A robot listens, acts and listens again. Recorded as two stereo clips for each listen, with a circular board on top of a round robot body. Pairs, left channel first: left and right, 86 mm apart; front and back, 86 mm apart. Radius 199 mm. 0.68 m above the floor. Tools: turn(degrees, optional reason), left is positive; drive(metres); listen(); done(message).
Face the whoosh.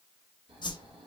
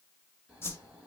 turn(degrees=60, reason="The whoosh: 60° left.")
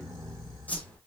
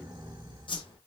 turn(degrees=15, reason="The whoosh is now 15° left.")
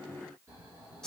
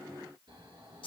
done("Found it: a whoosh, straight ahead.")